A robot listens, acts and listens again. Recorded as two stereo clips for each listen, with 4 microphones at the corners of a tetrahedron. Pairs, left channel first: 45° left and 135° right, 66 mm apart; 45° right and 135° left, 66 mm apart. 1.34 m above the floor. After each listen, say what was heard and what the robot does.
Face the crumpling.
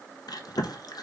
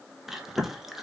Keep listening.
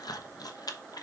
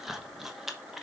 Keep listening.
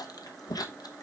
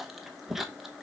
I can't make out crumpling, only chewing.